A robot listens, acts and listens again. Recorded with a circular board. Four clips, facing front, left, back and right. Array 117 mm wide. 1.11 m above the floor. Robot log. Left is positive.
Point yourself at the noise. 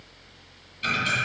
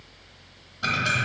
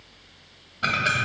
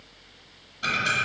note: The ticking: 170° left.
cmd yaw +170
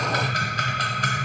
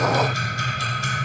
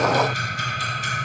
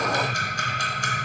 note: The ticking is now 20° right.
cmd yaw -20
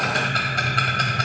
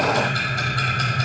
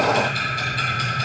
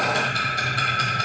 end: Facing the ticking, under 1 m away.